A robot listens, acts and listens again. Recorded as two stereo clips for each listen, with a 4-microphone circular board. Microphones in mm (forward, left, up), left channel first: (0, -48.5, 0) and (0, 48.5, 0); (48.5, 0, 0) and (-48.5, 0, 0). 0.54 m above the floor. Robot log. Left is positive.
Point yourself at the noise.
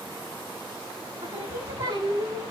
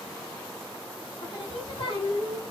note: The singing: 35° left.
cmd yaw +35
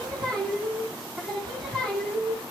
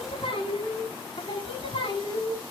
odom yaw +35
note: The singing is now 10° right.
cmd yaw -10
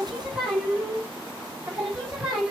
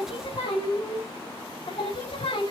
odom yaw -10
end: Found it: singing, straight ahead, over 4 m away.